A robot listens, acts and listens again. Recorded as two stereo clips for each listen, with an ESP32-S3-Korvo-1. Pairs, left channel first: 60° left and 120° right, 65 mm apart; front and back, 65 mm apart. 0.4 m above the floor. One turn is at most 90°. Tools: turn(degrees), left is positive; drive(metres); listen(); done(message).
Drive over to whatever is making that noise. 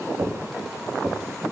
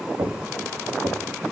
turn(degrees=-90)
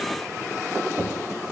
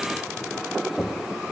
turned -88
turn(degrees=-75)
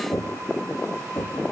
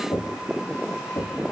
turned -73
drive(metres=1.0)
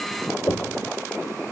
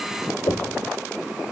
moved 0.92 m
drive(metres=1.0)
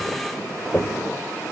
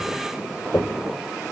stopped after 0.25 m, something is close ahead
done("Arrived at the knocking, straight ahead.")